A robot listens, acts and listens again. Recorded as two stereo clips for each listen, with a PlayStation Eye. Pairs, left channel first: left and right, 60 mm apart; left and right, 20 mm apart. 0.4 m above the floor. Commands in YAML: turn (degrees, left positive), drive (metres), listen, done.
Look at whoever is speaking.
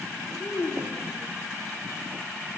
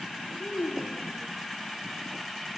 turn: 65
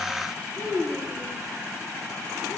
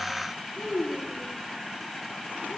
done: "Found it: a child speaking, straight ahead, over 4 m away."